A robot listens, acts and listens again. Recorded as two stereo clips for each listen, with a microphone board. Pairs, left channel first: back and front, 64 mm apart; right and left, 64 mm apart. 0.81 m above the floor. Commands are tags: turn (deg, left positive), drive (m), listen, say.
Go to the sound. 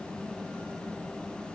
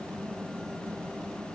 <listen/>
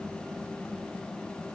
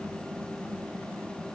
<listen/>
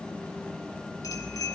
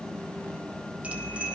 <turn deg="160"/>
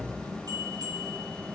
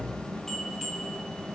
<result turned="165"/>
<drive m="1.0"/>
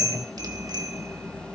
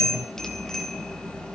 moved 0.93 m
<turn deg="-10"/>
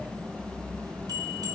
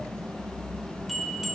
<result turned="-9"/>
<drive m="1.0"/>
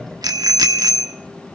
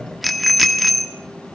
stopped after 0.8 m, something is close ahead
<say>Arrived at the bicycle bell, straight ahead.</say>